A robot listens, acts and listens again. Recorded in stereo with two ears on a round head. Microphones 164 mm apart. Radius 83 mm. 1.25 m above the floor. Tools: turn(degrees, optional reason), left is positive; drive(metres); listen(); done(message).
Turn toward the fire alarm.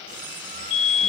turn(degrees=70, reason="The fire alarm: about 70° left or 110° left.")
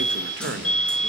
done("Found it: a fire alarm, straight ahead, over 4 m away.")